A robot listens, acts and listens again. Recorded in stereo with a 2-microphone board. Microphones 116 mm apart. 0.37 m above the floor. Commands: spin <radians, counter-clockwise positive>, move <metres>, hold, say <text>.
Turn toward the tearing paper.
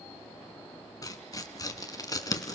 spin 0.52
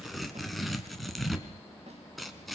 say Found it: tearing paper, straight ahead, 1 to 2 m away.